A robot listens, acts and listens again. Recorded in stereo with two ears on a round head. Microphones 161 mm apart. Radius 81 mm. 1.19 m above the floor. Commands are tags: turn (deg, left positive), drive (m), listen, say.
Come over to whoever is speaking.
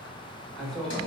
<turn deg="30"/>
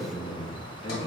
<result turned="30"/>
<turn deg="145"/>
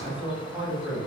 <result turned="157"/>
<turn deg="-10"/>
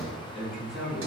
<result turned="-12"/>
<drive m="1.0"/>
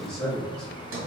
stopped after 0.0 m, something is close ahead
<say>Blocked. The man speaking is further on, straight ahead.</say>